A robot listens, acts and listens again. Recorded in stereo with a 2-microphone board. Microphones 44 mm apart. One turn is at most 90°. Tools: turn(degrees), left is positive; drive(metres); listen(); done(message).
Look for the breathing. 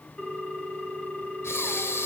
turn(degrees=90)
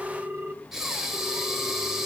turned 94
turn(degrees=-10)
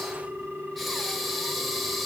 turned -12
done("Facing the breathing, 2 to 4 m away.")